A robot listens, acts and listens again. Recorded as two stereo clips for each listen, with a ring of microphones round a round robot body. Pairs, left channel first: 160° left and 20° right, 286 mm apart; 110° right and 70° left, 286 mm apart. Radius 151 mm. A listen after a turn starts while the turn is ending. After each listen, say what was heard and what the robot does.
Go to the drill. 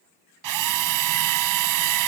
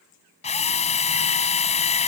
The drill: 45° right. Turn 45° right.
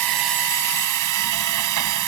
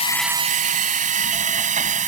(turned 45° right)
Drive 1.0 m forward.
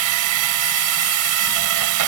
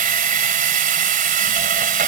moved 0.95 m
Drive 1.0 m forward.
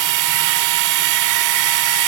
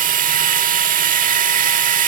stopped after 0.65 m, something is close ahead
Arrived at the drill, straight ahead.